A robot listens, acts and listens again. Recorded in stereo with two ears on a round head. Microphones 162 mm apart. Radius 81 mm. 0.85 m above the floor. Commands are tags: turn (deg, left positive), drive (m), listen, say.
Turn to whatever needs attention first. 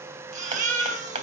<turn deg="-45"/>
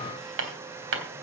<listen/>
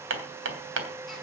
<listen/>
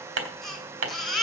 <say>Found it: a baby crying, straight ahead.</say>